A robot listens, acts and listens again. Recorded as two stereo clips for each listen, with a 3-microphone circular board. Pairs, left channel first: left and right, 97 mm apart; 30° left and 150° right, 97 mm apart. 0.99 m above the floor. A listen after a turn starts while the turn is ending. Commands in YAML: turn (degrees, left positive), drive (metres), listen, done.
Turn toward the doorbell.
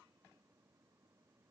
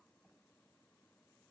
listen: true
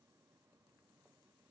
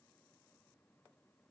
listen: true
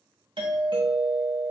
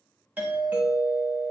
turn: -80
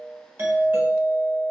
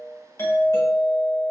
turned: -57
turn: -20
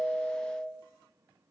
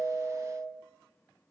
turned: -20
done: "Found it: a doorbell, straight ahead, 1 to 2 m away."